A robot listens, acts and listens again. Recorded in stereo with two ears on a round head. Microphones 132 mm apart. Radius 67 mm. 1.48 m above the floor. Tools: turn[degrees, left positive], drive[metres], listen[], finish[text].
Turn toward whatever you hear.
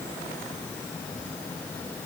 Action: listen[]
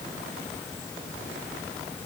Action: listen[]
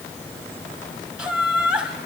Action: turn[-30]
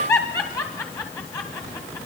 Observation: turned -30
Thought: So it is at 25° left.
Action: turn[25]
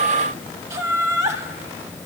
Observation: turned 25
Thought: The laughter is now 20° right.
Action: turn[-20]
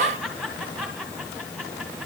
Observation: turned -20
Action: finish[Found it: laughter, straight ahead.]